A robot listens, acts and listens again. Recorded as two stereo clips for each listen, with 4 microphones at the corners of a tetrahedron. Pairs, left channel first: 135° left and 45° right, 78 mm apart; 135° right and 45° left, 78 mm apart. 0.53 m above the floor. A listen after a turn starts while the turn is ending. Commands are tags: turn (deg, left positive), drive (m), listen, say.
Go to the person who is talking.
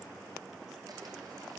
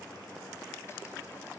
<listen/>
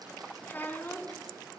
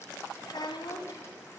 <turn deg="-160"/>
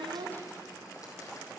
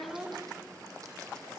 <listen/>
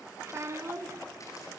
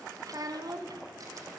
<turn deg="10"/>
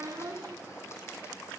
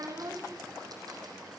<drive m="1.0"/>
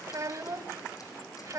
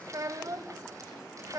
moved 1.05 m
<drive m="1.0"/>
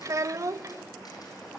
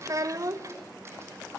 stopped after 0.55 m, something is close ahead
<say>Arrived at the child speaking, straight ahead.</say>